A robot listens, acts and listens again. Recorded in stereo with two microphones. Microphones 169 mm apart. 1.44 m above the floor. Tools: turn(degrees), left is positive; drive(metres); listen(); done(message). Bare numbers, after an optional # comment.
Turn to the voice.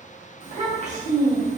# The child speaking: about 45° right or 135° right.
turn(-45)
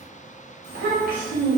# So it is at 80° right.
turn(-80)
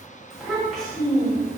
done("Facing the child speaking.")